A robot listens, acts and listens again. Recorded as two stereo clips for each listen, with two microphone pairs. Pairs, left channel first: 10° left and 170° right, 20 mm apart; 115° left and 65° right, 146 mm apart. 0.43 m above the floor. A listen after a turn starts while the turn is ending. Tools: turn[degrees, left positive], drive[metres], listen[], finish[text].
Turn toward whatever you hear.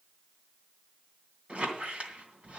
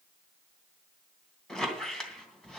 Thought: The squeak: 160° right.
Action: turn[-160]
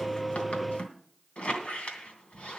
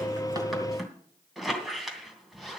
Thought: The squeak is now 20° left.
Action: turn[20]
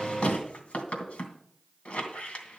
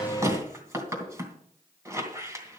Action: finish[Facing the squeak, 2 to 4 m away.]